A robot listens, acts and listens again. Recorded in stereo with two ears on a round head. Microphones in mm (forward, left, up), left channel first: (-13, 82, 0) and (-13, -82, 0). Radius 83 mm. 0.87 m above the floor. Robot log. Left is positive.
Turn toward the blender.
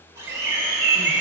note: The blender: about 15° right or 165° right.
cmd yaw -15
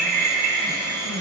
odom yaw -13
cmd idle
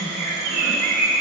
cmd idle
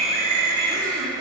end: I heard a blender, but can't make it out now. It was about 5° right or 150° right.